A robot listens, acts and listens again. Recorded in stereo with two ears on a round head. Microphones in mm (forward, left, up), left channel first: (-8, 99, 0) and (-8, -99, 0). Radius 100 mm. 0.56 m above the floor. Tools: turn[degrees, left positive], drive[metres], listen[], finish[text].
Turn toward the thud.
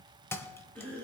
Action: turn[30]
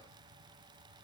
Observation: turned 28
Action: listen[]
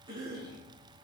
Action: finish[I heard a thud, but can't make it out now. It was about 15° right or 140° left.]